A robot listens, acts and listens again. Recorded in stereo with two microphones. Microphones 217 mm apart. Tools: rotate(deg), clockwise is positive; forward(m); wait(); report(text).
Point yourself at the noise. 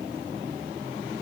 wait()
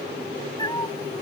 rotate(-20)
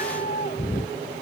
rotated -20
rotate(-140)
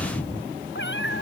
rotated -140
rotate(-60)
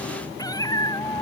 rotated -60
rotate(-15)
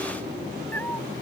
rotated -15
rotate(-10)
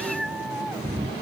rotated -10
report("Found it: a cat meowing, straight ahead.")